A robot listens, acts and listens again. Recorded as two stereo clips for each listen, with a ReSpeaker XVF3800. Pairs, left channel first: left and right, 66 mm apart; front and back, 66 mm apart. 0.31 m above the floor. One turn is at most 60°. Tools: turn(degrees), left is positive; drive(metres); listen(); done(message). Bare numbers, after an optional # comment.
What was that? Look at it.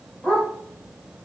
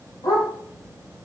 # The dog barking: 10° left.
turn(10)
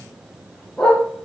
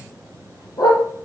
# The dog barking is now 15° left.
turn(15)
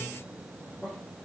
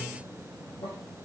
listen()
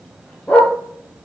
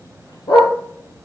# The dog barking is now 15° left.
turn(15)
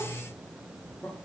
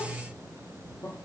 listen()
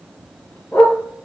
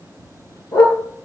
# The dog barking is now 25° left.
turn(25)
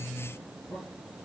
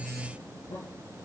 listen()
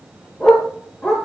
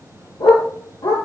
# The dog barking is now 10° left.
turn(10)
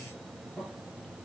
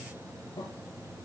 listen()
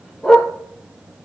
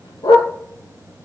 done("Facing the dog barking.")